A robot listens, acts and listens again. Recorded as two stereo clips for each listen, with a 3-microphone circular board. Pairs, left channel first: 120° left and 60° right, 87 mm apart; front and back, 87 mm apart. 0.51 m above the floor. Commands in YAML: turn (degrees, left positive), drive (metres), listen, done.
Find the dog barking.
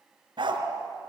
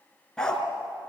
turn: -80
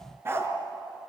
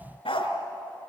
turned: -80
done: "Facing the dog barking, 2 to 4 m away."